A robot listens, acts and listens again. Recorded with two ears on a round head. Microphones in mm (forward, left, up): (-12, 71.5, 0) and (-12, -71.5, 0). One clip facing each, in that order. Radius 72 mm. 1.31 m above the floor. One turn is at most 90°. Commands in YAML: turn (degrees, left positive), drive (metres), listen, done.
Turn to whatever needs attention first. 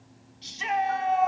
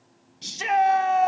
turn: -60
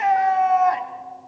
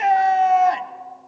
turn: -35
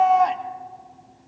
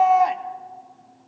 done: "Facing the shout."